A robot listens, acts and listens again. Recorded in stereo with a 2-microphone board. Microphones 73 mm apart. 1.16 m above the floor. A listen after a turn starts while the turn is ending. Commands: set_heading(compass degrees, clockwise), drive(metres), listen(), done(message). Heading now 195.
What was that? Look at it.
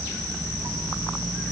listen()
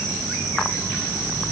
listen()
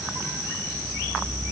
done("I can't make out anything to turn to.")